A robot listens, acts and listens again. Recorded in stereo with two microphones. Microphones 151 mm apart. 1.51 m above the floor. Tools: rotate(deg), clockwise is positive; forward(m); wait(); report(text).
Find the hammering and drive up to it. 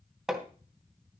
rotate(30)
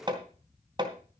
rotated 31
rotate(145)
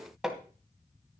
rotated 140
forward(1.0)
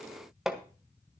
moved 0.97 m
forward(1.0)
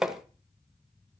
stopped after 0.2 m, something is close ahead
report("Arrived at the hammering, straight ahead.")